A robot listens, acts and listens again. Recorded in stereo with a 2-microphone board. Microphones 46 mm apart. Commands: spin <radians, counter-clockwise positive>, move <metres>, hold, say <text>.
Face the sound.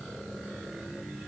hold
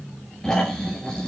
spin 0.26
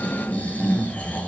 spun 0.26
spin 2.53
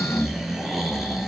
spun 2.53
spin -0.17
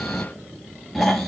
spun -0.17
say Facing the snoring, 2 to 4 m away.